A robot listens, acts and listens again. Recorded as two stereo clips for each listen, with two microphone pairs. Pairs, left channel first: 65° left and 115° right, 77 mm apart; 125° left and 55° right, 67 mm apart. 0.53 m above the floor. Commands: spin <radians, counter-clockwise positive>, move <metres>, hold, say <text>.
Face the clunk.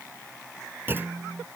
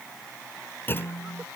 spin 3.14
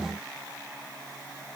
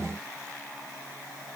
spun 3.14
say Facing where the clunk came from. I can't hear it now.